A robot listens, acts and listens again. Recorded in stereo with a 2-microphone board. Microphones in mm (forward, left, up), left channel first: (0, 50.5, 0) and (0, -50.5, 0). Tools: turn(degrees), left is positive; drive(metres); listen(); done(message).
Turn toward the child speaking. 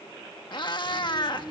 turn(degrees=-20)
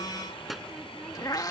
turn(degrees=30)
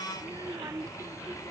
turn(degrees=-30)
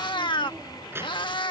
turn(degrees=-25)
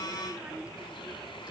turn(degrees=-10)
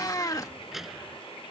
done("Facing the child speaking.")